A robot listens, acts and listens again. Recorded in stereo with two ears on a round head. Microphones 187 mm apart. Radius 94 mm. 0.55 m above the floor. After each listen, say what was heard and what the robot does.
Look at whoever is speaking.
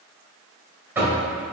Keep listening.
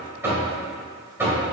Keep listening.
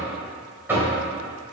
I can't make out anyone speaking to turn to.